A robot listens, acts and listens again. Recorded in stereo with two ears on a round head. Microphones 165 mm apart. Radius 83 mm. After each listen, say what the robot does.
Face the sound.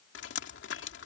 Turn 65° left.
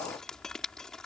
Facing the dripping.